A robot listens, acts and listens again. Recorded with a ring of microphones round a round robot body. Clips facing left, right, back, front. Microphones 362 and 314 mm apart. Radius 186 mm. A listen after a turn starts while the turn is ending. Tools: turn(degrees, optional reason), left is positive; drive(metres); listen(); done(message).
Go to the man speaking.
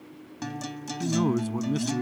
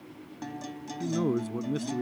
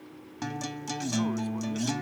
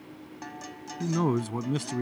turn(degrees=20, reason="The man speaking: 20° left.")
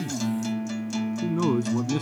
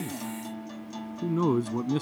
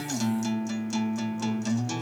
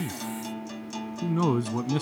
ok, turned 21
drive(metres=1.0)
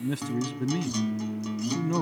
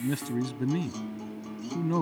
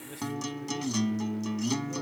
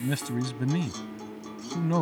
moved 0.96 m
drive(metres=1.0)
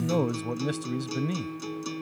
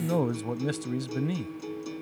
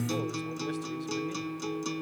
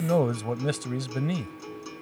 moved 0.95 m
drive(metres=1.0)
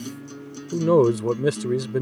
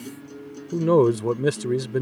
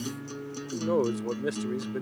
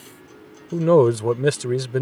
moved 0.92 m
drive(metres=1.0)
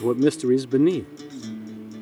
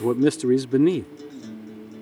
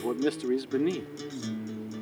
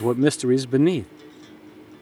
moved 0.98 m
drive(metres=1.0)
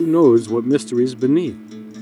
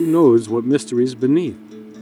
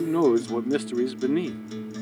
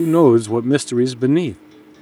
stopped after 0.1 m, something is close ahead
done("I am next to the man speaking.")